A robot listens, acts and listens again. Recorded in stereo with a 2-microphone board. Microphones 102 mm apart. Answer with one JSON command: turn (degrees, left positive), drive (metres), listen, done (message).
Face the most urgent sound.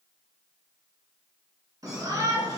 {"turn": -35}
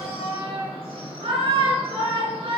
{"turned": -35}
{"turn": -105}
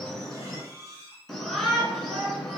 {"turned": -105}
{"done": "Facing the shout."}